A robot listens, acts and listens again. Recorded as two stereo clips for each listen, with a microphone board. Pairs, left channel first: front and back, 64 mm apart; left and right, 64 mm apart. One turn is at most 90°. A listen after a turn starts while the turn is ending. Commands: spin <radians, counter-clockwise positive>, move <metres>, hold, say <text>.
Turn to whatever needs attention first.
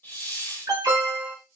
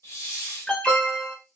spin 1.57
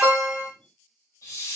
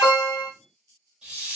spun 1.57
spin 1.31
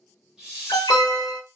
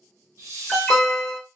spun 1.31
say Found it: an alarm, straight ahead.